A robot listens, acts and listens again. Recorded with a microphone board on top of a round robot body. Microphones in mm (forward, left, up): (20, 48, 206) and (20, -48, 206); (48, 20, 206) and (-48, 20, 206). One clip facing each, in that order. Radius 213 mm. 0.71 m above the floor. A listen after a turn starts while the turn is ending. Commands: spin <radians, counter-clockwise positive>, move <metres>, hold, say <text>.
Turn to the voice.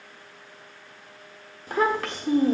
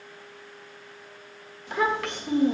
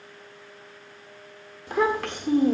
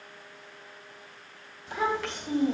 spin 0.70
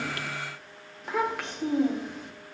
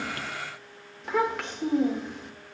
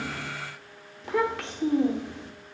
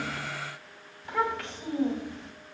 say Found it: a child speaking, straight ahead, 1 to 2 m away.